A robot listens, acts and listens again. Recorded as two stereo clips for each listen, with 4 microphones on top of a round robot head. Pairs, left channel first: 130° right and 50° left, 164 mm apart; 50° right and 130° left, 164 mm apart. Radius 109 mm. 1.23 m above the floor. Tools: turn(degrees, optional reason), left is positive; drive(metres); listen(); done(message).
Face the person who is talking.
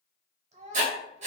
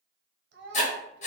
turn(degrees=105, reason="The child speaking: 105° left.")
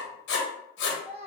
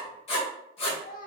done("Found it: a child speaking, straight ahead, under 1 m away.")